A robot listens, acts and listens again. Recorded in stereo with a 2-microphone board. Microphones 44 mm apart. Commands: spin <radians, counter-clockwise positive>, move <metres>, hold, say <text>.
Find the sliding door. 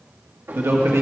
spin -0.96
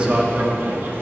spin -1.13
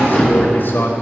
spin 0.26
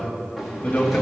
say Facing the sliding door, 1 to 2 m away.